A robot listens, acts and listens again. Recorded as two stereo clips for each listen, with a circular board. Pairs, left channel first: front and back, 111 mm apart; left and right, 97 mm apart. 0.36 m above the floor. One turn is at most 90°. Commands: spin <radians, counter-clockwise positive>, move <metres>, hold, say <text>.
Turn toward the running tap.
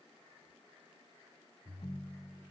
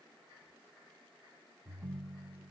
hold
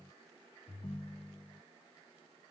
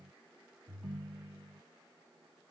hold
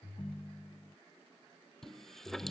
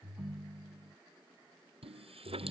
spin -1.48
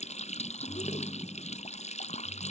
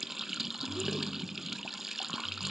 say Facing the running tap.